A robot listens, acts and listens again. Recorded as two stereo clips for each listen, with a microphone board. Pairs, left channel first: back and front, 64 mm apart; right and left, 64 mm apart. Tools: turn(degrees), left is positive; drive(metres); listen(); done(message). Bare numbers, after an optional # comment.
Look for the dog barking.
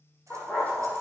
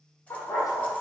# The dog barking: 115° right.
turn(-115)
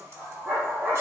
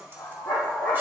# The dog barking is now 65° right.
turn(-65)
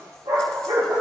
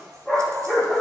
done("Found it: a dog barking, straight ahead, over 4 m away.")